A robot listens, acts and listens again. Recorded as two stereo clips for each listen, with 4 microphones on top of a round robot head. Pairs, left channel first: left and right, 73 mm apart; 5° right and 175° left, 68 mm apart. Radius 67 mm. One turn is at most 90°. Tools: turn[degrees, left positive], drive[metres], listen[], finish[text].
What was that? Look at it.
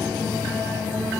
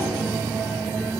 Action: listen[]
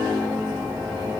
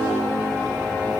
Action: listen[]
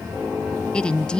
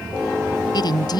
Thought: The woman speaking: 10° left.
Action: turn[10]
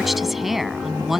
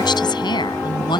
Action: finish[Found it: a woman speaking, straight ahead.]